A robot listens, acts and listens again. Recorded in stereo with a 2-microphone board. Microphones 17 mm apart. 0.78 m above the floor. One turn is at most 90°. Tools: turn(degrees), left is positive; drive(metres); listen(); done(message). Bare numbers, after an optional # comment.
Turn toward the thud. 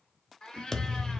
# The thud: about 20° left or 160° left.
turn(20)
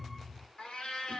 done("Found it: a thud, straight ahead, under 1 m away.")